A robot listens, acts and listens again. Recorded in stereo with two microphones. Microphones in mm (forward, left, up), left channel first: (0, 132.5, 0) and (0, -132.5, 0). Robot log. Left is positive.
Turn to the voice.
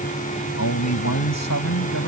cmd yaw +90
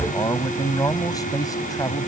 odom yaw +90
note: So it is at 15° left.
cmd yaw +15
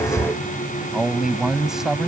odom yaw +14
end: Facing the man speaking.